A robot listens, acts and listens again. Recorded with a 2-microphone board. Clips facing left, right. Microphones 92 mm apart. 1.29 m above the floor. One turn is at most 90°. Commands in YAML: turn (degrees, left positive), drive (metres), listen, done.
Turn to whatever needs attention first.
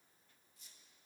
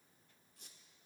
listen: true
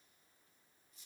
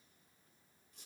listen: true
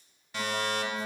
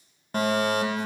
turn: -45
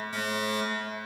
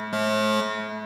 turn: -80
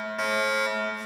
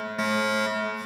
done: "Facing the fire alarm."